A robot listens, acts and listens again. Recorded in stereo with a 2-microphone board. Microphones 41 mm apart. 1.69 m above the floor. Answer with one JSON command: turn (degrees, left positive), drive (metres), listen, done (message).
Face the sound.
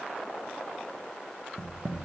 {"turn": -70}
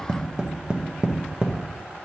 {"turn": -20}
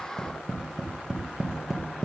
{"done": "Found it: tapping, straight ahead, under 1 m away."}